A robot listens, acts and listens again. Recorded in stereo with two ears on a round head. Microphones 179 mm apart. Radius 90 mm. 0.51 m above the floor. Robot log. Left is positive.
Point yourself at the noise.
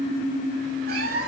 note: The cat meowing: about 45° right or 135° right.
cmd yaw -45
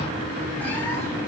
cmd idle
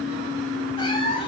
note: So it is at 30° left.
cmd yaw +30
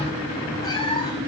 note: The cat meowing is now 25° left.
cmd yaw +25
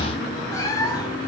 note: The cat meowing is now 20° left.
cmd yaw +20
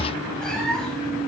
end: Found it: a cat meowing, straight ahead.